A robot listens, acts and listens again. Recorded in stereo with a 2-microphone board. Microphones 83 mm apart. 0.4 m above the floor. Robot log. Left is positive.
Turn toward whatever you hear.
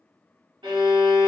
note: The violin: about 75° right or 105° right.
cmd yaw -75
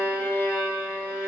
note: So it is at 25° right.
cmd yaw -25
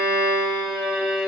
note: The violin is now 10° right.
cmd yaw -10
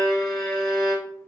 end: Found it: a violin, straight ahead, 1 to 2 m away.